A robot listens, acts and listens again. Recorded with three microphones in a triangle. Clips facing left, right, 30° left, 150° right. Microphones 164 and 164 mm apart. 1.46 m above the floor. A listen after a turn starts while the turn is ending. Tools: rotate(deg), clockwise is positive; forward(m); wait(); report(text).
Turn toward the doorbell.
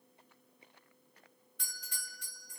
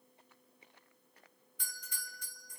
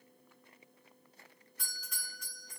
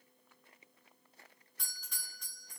rotate(-120)
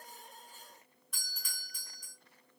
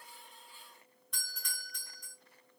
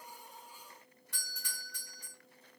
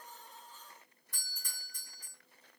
report("Facing the doorbell, 1 to 2 m away.")